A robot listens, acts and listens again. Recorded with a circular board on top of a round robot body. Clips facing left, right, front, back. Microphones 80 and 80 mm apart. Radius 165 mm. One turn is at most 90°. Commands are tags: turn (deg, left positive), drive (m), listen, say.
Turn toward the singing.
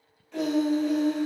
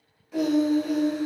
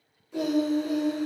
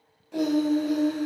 <turn deg="-90"/>
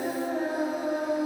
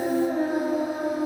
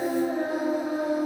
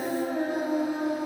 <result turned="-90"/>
<turn deg="-45"/>
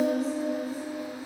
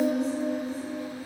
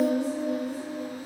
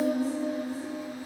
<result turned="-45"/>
<turn deg="20"/>
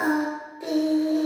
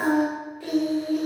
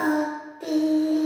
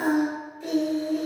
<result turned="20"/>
<turn deg="35"/>
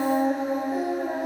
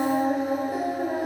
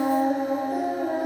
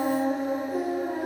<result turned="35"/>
<say>Facing the singing, 1 to 2 m away.</say>